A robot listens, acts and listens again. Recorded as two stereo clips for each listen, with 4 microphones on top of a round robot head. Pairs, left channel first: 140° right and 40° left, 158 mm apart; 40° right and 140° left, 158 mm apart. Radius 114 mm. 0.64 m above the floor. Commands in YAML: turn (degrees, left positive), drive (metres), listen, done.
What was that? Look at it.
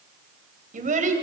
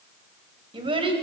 turn: 80
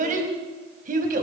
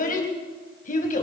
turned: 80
done: "Facing the child speaking."